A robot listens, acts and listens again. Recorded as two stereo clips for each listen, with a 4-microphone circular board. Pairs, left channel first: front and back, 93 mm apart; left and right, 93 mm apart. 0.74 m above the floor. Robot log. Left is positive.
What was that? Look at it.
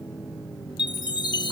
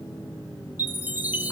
note: The chime: 25° right.
cmd yaw -25
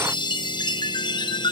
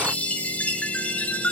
note: The chime is now 20° left.
cmd yaw +20
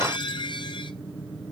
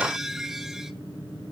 end: Found it: a chime, straight ahead, under 1 m away.